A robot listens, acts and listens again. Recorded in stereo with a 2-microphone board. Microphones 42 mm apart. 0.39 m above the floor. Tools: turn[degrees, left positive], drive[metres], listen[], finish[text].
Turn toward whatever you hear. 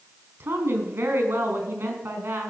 Thought: The woman speaking: about 65° right or 115° right.
Action: turn[-65]
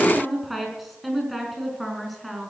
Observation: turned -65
Action: finish[Found it: a woman speaking, straight ahead, over 4 m away.]